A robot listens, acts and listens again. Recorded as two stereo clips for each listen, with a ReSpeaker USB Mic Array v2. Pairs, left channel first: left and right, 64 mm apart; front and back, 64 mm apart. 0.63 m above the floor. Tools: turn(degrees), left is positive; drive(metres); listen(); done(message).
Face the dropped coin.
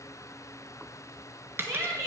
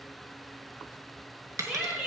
turn(degrees=-145)
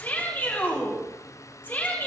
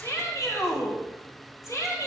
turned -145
done("I heard a dropped coin from this way, but can't make it out now.")